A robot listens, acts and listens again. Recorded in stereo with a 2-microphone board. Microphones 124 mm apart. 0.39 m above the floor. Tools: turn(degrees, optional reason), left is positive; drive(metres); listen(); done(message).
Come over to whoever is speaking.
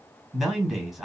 turn(degrees=30)
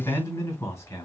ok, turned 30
turn(degrees=155, reason="So it is at 155° left.")
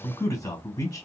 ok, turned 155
turn(degrees=30, reason="The man speaking is now 30° left.")
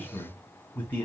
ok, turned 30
turn(degrees=15, reason="The man speaking is now 15° left.")
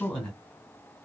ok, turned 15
drive(metres=1.0)
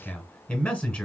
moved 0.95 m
turn(degrees=10, reason="The man speaking is now 10° left.")
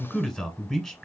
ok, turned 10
drive(metres=1.0)
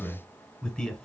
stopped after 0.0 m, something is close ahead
turn(degrees=10, reason="The man speaking is now 10° left.")
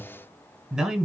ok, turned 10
done("I am next to the man speaking.")